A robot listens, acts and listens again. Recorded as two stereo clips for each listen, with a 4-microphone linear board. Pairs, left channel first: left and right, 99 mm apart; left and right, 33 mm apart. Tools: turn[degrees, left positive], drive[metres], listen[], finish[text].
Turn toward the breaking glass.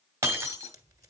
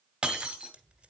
Thought: The breaking glass: about 30° right or 150° right.
Action: turn[-30]
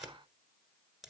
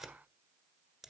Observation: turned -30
Action: listen[]
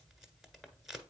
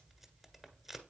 Action: finish[I heard breaking glass, but can't make it out now. It was about straight ahead or 120° right.]